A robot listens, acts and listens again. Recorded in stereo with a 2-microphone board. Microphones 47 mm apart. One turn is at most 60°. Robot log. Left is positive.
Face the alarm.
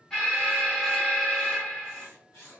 cmd yaw +30
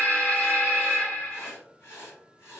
note: So it is at 135° left.
cmd yaw +60
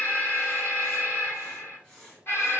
note: The alarm is now 80° left.
cmd yaw +60
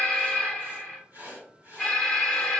note: The alarm is now 20° left.
cmd yaw +20
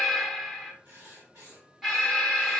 end: Found it: an alarm, straight ahead.